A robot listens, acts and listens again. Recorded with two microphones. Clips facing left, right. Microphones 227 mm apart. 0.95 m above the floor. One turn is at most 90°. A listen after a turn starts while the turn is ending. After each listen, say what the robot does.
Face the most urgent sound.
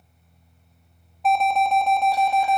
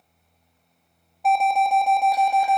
Turn 30° right.
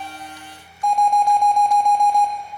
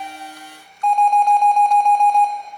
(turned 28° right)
Turn 15° left.
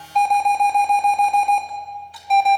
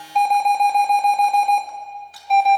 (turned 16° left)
Facing the alarm.